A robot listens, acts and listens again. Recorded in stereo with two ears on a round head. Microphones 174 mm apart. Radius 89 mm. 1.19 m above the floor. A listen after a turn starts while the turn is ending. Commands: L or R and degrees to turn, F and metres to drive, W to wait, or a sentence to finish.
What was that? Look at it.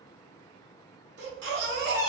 R60
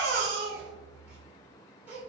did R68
R10
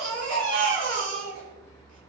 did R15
Facing the baby crying.